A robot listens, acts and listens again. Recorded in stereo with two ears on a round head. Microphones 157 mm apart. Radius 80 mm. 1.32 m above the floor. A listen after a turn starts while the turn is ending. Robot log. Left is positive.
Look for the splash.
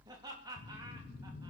cmd idle
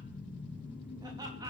cmd idle
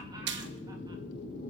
note: The splash: about 65° right or 115° right.
cmd yaw -65
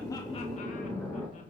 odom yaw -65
cmd idle
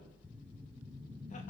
end: I heard a splash, but can't make it out now. It was about straight ahead or 50° right.